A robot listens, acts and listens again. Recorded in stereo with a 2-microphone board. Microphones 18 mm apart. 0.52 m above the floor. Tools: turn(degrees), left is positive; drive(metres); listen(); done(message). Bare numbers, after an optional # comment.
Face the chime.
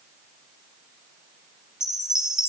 # The chime: about 50° right or 130° right.
turn(-50)
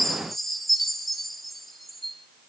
done("Facing the chime.")